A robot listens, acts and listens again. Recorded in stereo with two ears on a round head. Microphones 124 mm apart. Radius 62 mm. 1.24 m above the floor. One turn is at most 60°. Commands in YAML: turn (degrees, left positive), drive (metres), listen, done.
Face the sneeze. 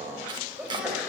turn: -30
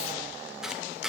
listen: true
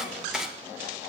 done: "I heard a sneeze, but can't make it out now. It was about 25° left or 145° right."